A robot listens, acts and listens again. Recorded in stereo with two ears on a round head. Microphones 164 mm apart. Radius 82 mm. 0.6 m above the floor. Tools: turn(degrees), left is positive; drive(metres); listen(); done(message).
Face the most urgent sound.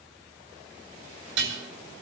listen()
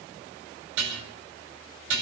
listen()
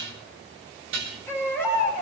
turn(degrees=30)
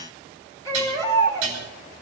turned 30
turn(degrees=-20)
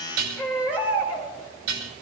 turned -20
turn(degrees=-10)
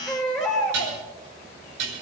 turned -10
done("Facing the baby crying, over 4 m away.")